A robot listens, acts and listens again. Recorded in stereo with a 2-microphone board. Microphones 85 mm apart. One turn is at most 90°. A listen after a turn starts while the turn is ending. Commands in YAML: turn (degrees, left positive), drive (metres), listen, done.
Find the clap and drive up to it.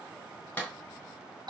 turn: 20
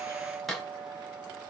drive: 1.0
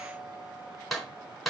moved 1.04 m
drive: 1.0
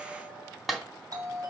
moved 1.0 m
drive: 1.0
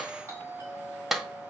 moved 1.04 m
drive: 1.0
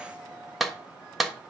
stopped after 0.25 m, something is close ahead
done: "Arrived at the clap, straight ahead."